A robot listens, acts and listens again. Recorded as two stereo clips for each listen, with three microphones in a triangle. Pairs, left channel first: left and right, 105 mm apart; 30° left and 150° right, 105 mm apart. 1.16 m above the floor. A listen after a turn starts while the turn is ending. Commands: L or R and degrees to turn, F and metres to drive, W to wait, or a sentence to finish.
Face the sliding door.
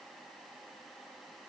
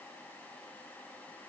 W
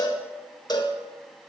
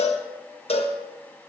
W
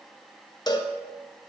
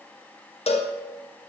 I can't make out a sliding door, only a cowbell.